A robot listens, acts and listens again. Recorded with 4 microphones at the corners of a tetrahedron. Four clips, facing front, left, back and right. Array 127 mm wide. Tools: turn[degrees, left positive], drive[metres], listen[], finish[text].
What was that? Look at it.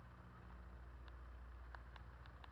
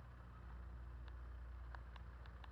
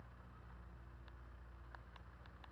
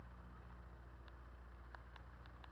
Action: listen[]
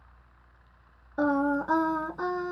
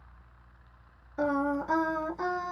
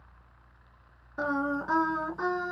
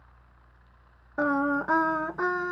Thought: The singing: 85° right.
Action: turn[-85]
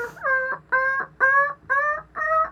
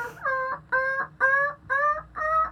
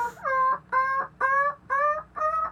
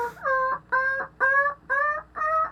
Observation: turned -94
Thought: The singing is now 30° right.
Action: turn[-30]
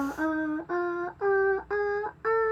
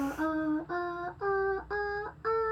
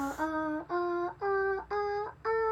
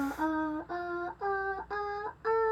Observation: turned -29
Action: finish[Found it: singing, straight ahead.]